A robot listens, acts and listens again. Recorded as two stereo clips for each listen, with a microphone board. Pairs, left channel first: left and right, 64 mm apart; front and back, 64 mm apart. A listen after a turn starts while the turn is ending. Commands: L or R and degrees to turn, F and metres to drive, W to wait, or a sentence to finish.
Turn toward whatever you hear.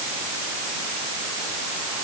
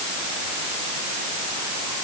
W
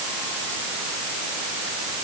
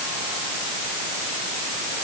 W
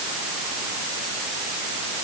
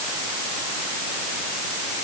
I can't make out anything to turn to.